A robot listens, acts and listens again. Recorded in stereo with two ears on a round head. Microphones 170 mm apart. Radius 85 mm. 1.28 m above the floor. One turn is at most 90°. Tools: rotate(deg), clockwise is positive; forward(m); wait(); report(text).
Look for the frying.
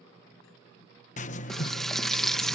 rotate(-30)
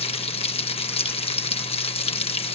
rotate(-90)
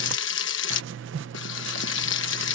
rotate(-70)
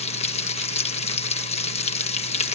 rotate(-35)
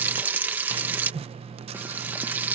rotate(10)
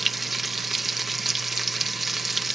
report("Facing the frying.")